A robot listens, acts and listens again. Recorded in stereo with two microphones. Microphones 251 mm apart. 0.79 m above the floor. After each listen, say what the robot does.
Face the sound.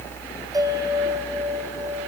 Turn 30° right.
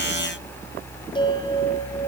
Turn 20° left.
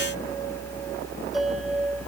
Keep listening.
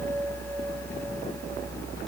Keep listening.
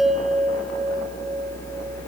Found it: a bell, straight ahead.